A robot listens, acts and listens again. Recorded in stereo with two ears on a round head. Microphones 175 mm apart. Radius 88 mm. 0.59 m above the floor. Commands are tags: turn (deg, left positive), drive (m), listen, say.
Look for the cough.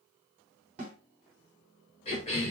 <turn deg="30"/>
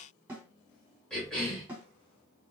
<say>Found it: a cough, straight ahead.</say>